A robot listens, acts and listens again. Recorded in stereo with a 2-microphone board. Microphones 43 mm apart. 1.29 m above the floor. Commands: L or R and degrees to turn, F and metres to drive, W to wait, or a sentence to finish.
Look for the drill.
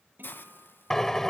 L30
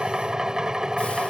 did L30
R20
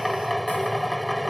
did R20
Facing the drill.